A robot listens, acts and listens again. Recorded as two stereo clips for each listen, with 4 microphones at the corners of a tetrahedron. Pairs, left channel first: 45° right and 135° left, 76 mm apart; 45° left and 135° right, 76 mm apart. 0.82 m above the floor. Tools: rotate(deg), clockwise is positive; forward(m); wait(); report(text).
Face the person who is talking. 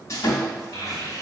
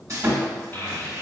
rotate(10)
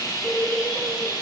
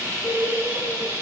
rotate(-10)
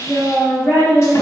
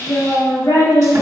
rotate(-15)
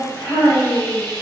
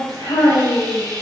rotate(-10)
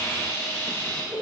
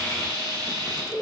rotate(-10)
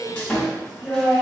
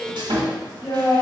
report("Facing the child speaking, 2 to 4 m away.")